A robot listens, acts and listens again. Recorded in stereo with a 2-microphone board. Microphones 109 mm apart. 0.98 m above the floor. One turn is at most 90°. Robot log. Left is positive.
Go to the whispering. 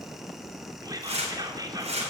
note: The whispering: about 35° right or 145° right.
cmd yaw -35
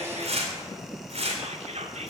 note: So it is at 110° right.
cmd yaw -90
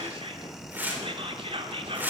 note: The whispering is now 55° right.
cmd yaw -55
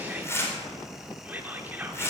note: The whispering is now 15° right.
cmd yaw -15
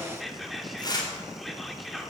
cmd fwd 1.0
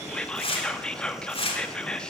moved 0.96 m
cmd fwd 1.0
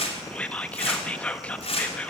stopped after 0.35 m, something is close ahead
note: The whispering is now 10° left.
cmd yaw +10
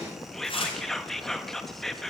end: Arrived at the whispering, straight ahead.